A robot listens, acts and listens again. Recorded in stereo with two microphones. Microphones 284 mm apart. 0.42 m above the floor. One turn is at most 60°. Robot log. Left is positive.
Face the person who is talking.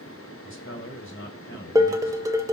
note: The man speaking: about 45° left or 135° left.
cmd yaw +45
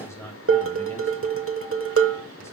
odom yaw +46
note: So it is at 10° left.
cmd yaw +10
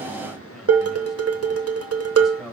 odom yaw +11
end: Facing the man speaking.